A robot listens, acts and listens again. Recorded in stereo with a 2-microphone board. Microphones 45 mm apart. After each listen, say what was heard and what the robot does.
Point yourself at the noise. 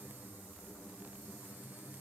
Keep listening.
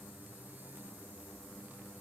Keep listening.
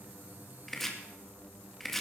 Turn 30° left.
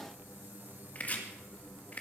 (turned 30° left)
So it is at 145° left. Turn 145° left.
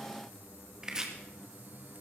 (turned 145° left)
The chopping is now 15° right. Turn 15° right.
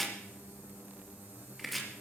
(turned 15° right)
Facing the chopping, 1 to 2 m away.